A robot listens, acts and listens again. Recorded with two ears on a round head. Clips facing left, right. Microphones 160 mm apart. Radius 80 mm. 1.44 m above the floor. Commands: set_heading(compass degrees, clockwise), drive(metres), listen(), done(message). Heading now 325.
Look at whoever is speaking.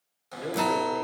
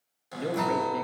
set_heading(35)
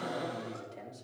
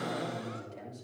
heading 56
done("Facing the man speaking, 2 to 4 m away.")